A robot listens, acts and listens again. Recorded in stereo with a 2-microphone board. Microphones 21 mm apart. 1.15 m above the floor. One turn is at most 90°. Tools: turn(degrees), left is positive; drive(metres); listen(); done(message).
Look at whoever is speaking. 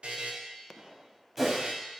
listen()
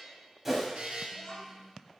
turn(degrees=20)
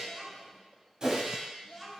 done("Found it: a child speaking, straight ahead.")